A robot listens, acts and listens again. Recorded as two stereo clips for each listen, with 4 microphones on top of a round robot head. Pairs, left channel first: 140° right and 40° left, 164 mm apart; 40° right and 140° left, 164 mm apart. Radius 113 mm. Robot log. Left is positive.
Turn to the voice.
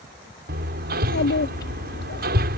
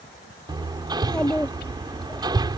note: The child speaking: 125° right.
cmd yaw -125
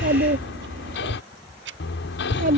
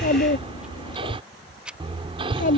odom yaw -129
end: Found it: a child speaking, straight ahead.